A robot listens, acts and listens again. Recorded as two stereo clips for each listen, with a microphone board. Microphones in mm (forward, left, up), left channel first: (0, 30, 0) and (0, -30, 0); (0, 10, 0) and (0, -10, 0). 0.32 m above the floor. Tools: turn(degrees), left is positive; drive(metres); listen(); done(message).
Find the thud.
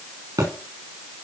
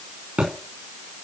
turn(degrees=-90)
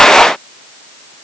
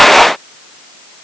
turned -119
turn(degrees=30)
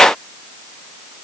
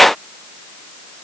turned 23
done("I heard a thud from this way, but can't make it out now.")